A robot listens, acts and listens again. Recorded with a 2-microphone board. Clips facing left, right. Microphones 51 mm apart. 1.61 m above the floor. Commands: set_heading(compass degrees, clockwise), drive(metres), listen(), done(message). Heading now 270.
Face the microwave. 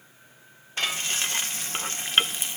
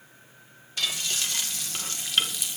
listen()
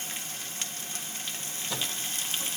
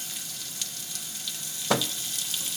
set_heading(345)
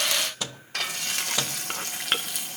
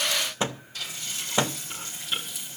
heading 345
set_heading(15)
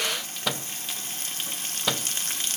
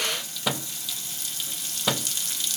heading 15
done("Found it: a microwave, straight ahead.")